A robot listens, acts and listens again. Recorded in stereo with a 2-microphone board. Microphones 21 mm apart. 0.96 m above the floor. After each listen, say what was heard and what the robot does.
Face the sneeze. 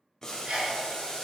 The sneeze: about 60° right or 120° right. Turn 60° right.
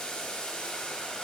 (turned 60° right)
Keep listening.
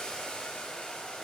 I heard a sneeze, but can't make it out now. It was about straight ahead or 60° right.